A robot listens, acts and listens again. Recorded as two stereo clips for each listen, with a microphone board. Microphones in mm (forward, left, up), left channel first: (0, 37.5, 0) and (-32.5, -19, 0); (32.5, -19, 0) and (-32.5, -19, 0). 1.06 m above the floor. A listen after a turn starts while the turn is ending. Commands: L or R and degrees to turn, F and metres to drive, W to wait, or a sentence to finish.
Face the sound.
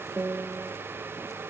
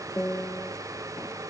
R55
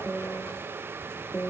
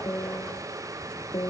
Facing the piano.